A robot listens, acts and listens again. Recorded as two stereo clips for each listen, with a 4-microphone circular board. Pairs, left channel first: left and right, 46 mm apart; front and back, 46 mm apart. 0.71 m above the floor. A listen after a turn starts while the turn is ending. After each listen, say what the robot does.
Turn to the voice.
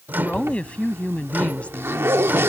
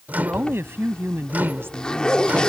Turn 155° left.
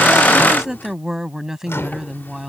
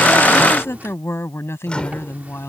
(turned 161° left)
Turn 10° right.
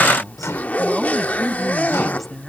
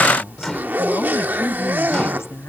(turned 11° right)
Facing the woman speaking.